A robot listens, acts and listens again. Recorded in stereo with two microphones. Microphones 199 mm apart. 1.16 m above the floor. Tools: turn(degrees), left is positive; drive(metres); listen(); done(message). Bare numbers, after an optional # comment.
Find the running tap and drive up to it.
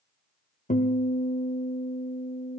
listen()
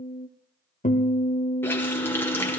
turn(30)
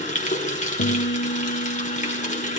# So it is at 140° left.
turn(140)
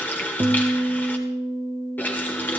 # The running tap is now 10° left.
turn(10)
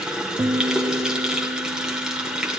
drive(1.0)
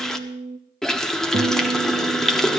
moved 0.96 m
drive(1.0)
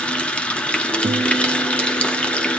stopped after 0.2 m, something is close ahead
done("Arrived at the running tap, straight ahead.")